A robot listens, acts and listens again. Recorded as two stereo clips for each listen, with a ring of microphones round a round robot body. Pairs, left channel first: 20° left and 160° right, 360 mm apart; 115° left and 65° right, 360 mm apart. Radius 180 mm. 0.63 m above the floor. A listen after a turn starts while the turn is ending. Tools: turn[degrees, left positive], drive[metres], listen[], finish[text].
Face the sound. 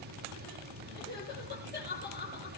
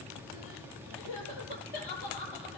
Thought: The crying: 85° left.
Action: turn[85]
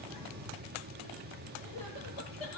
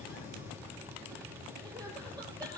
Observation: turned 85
Thought: The crying is now 10° left.
Action: turn[10]
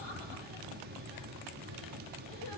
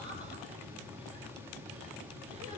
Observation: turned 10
Action: listen[]
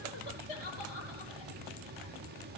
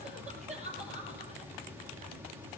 Action: finish[Found it: crying, straight ahead.]